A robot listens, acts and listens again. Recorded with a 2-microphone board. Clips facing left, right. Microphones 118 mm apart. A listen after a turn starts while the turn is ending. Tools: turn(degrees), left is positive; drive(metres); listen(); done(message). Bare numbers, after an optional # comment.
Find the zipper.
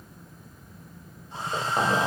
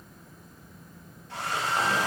# The zipper: about 30° left or 150° left.
turn(30)
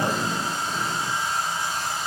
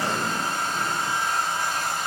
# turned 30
listen()
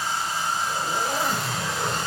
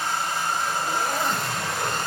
done("Found it: a zipper, straight ahead.")